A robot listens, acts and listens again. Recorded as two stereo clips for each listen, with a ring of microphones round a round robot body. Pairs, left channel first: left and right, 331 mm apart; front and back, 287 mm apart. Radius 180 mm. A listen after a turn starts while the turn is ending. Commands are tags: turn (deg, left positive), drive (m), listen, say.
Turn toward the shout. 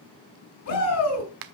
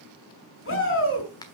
<turn deg="45"/>
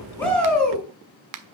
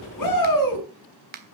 <say>Facing the shout.</say>